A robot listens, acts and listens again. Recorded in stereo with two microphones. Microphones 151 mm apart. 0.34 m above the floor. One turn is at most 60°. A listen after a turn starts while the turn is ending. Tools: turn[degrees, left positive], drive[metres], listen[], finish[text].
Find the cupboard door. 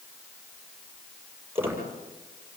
Action: listen[]
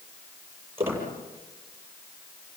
Action: listen[]
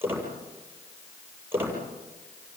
Action: finish[I can't make out a cupboard door, only a squeak.]